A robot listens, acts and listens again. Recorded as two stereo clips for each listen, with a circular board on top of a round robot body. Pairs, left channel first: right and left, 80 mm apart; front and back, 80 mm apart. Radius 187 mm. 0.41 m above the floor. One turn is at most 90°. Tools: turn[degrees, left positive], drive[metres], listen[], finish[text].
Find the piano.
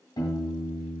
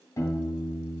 Thought: The piano: 50° right.
Action: turn[-50]
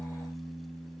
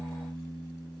Thought: The piano is now 10° left.
Action: turn[10]
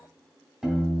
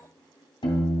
Action: finish[Facing the piano.]